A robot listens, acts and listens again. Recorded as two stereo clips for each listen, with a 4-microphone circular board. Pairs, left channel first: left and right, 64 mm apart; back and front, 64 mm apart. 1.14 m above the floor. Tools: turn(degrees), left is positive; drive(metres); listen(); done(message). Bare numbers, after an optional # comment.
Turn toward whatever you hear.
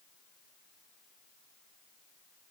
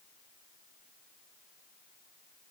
listen()
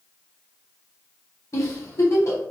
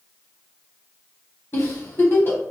# The giggle: 130° left.
turn(130)
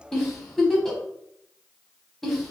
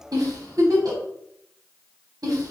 done("Facing the giggle.")